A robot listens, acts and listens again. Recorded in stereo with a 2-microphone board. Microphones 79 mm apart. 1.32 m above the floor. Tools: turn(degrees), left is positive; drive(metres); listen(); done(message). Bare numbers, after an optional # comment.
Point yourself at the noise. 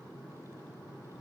listen()
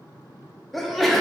turn(30)
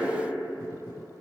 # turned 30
listen()
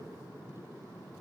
done("I heard a sneeze, but can't make it out now. It was about 30° right or 150° left.")